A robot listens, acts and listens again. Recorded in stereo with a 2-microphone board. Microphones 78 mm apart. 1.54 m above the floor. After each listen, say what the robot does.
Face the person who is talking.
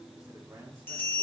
Turn 35° right.
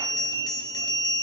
Keep listening.
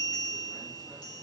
Keep listening.
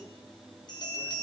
I heard a man speaking, but can't make it out now. It was about straight ahead or 110° right.